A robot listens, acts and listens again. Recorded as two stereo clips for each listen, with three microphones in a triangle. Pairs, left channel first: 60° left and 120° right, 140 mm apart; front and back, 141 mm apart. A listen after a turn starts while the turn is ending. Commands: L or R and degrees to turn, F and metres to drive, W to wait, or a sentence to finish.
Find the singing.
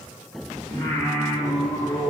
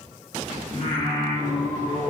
R25
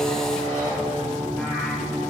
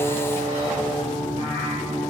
R35
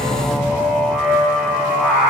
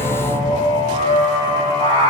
R45
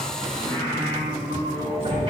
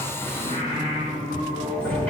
Facing the singing, 2 to 4 m away.